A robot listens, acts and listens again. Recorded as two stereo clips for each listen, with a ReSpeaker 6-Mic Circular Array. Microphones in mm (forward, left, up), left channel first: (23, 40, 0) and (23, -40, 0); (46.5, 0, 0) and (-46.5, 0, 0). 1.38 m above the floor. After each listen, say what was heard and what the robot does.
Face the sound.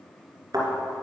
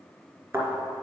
The thud: 120° right. Turn 120° right.
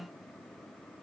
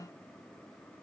Facing where the thud came from. I can't hear it now.